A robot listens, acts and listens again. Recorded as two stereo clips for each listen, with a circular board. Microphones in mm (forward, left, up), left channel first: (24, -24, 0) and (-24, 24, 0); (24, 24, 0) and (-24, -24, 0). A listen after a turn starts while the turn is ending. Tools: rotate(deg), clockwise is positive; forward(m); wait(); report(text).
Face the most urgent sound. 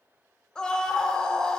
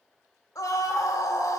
rotate(-30)
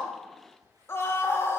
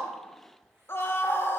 report("Found it: a scream, straight ahead, 1 to 2 m away.")